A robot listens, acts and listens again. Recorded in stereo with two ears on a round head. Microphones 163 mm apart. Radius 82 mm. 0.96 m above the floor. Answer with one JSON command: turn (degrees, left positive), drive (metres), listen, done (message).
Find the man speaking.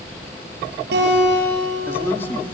{"turn": 30}
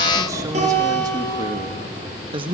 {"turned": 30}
{"turn": -30}
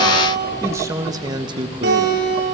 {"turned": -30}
{"turn": -30}
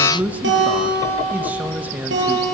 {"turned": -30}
{"turn": -10}
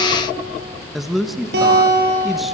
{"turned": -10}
{"done": "Facing the man speaking."}